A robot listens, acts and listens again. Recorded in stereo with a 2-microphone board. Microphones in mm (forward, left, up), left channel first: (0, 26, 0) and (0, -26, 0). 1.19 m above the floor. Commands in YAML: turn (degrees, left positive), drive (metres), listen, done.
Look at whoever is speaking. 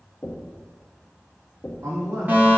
turn: -90
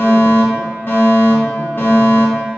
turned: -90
listen: true
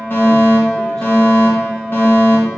listen: true
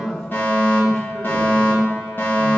turn: 10
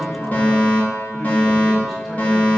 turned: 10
listen: true
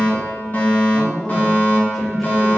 done: "Facing the man speaking."